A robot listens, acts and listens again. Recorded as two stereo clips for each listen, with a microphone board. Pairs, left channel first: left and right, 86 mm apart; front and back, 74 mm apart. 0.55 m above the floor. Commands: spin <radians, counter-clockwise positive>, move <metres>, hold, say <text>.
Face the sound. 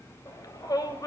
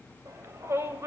spin 2.27
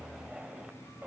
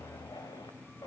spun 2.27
hold
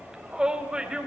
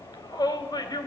spin -0.17
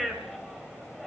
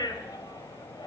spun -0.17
say Found it: a shout, straight ahead, 2 to 4 m away.